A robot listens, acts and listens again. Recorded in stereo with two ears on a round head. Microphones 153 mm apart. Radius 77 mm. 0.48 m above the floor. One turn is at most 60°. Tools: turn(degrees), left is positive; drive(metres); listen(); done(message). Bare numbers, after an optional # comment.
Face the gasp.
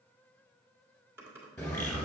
listen()
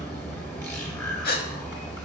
# The gasp: about 55° left or 125° left.
turn(55)
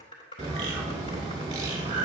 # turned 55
listen()
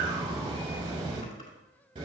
done("I heard a gasp, but can't make it out now. It was about straight ahead or 70° left.")